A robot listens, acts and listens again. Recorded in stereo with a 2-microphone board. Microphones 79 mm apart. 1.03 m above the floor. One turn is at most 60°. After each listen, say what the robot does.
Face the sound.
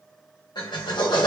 Turn 60° left.
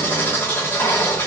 Turn 30° left.
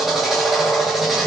Found it: a drill, straight ahead, 1 to 2 m away.